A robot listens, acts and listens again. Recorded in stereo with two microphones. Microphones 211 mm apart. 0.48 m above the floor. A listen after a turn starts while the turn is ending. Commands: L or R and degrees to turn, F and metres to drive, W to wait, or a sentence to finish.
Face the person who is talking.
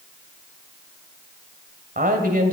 R45
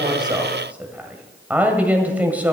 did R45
R10
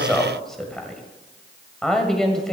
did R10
Found it: a woman speaking, straight ahead, 1 to 2 m away.